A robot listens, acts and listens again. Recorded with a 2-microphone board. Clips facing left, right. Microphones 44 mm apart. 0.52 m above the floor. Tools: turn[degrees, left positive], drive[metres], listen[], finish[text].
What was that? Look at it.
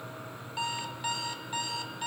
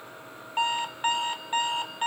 Thought: The alarm clock: about 40° right or 140° right.
Action: turn[-40]
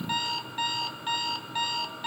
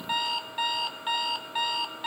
Thought: So it is at 10° right.
Action: turn[-10]
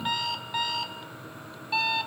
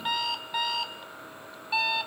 Action: finish[Facing the alarm clock.]